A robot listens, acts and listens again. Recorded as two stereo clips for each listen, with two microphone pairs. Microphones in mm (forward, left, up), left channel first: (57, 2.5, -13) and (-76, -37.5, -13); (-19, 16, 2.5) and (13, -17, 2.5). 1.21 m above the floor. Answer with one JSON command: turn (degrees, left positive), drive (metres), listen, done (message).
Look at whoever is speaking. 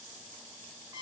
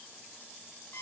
{"listen": true}
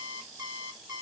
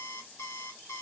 {"listen": true}
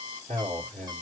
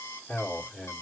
{"turn": 170}
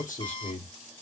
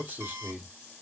{"done": "Facing the man speaking, 1 to 2 m away."}